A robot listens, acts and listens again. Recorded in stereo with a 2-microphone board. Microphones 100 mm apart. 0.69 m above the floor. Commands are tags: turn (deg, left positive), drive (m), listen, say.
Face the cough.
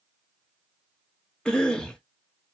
<turn deg="30"/>
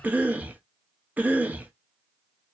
<turn deg="-20"/>
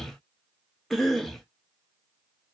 <say>Found it: a cough, straight ahead, under 1 m away.</say>